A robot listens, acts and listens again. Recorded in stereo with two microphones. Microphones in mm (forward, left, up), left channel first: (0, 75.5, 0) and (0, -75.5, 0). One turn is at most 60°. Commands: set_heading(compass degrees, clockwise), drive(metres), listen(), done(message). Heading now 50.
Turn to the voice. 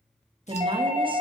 set_heading(85)
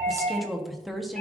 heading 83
done("Facing the woman speaking, 1 to 2 m away.")